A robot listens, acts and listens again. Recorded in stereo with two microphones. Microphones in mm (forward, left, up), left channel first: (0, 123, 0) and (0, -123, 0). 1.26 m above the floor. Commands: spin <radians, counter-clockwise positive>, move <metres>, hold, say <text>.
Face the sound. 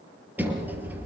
spin -0.52
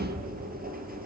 spin -2.53
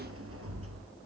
spin -1.05
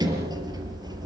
spin -0.26
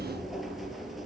say Facing the sliding door, over 4 m away.